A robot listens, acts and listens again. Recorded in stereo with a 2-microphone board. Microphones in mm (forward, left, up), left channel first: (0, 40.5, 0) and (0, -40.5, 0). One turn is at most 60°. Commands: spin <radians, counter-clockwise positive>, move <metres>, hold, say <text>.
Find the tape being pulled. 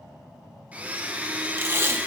spin -0.52
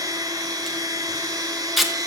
say Found it: tape being pulled, straight ahead, 1 to 2 m away.